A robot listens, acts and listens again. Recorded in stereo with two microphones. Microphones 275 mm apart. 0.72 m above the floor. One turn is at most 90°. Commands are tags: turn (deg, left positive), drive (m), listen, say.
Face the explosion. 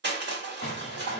<turn deg="35"/>
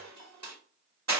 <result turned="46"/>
<listen/>
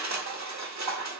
<say>I heard an explosion, but can't make it out now. It was about 10° right or 95° left.</say>